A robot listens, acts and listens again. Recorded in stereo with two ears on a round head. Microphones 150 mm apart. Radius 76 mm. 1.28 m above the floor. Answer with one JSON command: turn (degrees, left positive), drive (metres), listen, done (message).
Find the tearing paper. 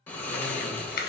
{"turn": 55}
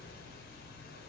{"listen": true}
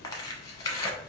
{"turn": 25}
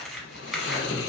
{"done": "Found it: tearing paper, straight ahead."}